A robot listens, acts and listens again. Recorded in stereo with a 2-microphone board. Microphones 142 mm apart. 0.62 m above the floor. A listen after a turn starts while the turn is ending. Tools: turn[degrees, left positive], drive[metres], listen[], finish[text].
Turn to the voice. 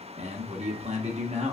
Thought: The man speaking: about 55° right or 125° right.
Action: turn[-55]
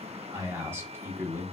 Thought: So it is at 20° right.
Action: turn[-20]
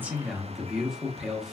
Action: finish[Facing the man speaking, 1 to 2 m away.]